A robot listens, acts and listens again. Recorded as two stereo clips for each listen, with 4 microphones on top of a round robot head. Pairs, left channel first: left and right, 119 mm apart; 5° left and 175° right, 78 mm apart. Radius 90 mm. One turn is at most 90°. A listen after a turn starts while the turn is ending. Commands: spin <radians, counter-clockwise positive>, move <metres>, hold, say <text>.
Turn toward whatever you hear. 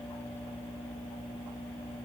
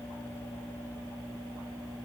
hold
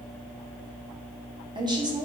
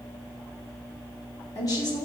spin -0.70
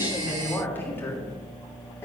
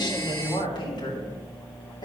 spin 0.44
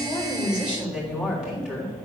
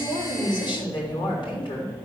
say Found it: a woman speaking, straight ahead, 2 to 4 m away.